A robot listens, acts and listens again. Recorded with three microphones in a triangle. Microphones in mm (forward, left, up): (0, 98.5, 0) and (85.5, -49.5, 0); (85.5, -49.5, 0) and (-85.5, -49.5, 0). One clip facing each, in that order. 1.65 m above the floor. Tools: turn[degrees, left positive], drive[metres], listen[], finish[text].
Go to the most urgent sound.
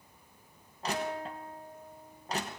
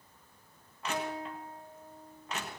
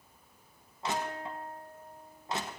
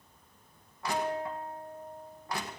Action: listen[]
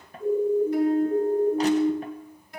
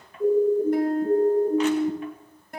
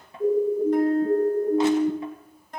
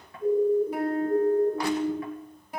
Action: drive[1.0]
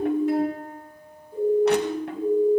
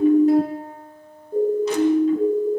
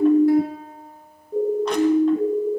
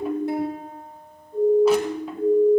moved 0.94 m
Thought: The siren is now 10° right.
Action: turn[-10]
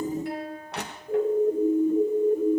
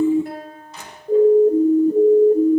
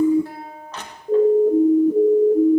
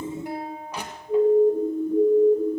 Action: drive[1.0]
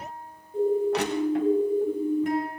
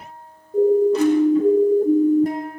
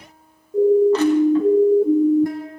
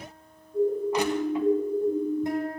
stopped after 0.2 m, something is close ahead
Thought: The siren is now 10° right.
Action: turn[-10]
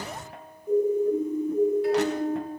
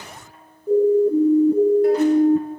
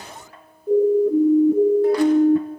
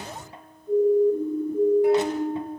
Action: finish[Arrived at the siren, straight ahead.]